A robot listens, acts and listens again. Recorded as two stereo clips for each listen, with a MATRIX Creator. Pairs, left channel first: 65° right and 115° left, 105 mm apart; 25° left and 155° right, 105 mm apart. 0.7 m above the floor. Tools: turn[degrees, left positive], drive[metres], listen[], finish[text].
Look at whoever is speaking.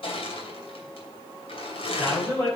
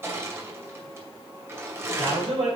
Thought: The man speaking: 135° right.
Action: turn[-135]
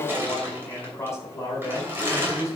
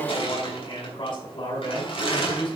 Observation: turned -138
Thought: The man speaking is now 10° right.
Action: turn[-10]
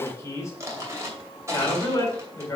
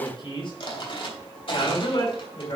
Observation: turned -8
Thought: The man speaking is now 10° right.
Action: turn[-10]
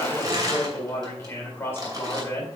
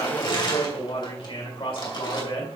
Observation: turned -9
Action: finish[Facing the man speaking.]